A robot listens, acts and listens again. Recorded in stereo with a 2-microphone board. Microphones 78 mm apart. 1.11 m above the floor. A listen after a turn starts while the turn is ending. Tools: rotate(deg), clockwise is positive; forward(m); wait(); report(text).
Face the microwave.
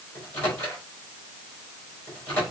rotate(-25)
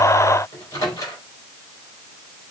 rotate(-135)
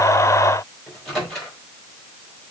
report("Facing the microwave, over 4 m away.")